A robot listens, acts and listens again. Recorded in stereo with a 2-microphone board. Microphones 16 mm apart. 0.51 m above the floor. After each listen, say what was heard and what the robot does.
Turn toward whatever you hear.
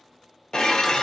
The dishes clattering: about 45° left or 135° left. Turn 45° left.
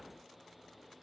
Keep listening.
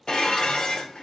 So it is at 80° left. Turn 80° left.
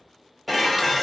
Facing the dishes clattering.